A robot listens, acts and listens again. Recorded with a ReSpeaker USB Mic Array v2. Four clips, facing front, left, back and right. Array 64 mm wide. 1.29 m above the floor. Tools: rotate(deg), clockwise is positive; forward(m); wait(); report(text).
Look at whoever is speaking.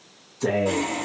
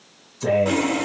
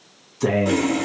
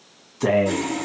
rotate(115)
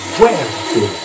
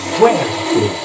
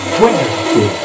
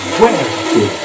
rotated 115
rotate(40)
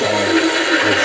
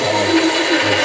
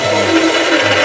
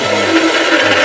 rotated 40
wait()
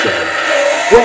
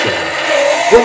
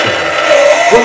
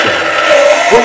rotate(25)
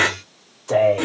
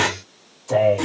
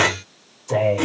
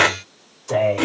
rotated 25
rotate(10)
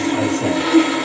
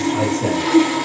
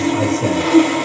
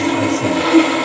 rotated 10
report("Facing the man speaking, 2 to 4 m away.")